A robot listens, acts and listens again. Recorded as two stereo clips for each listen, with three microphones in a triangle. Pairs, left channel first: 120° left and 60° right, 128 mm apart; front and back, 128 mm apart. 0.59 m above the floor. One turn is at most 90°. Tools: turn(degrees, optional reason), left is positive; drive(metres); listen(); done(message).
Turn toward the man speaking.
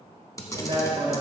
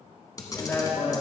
turn(degrees=-70, reason="The man speaking: 70° right.")
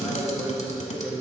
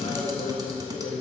turn(degrees=20, reason="The man speaking is now 20° left.")
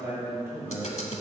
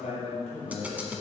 done("Found it: a man speaking, straight ahead, 2 to 4 m away.")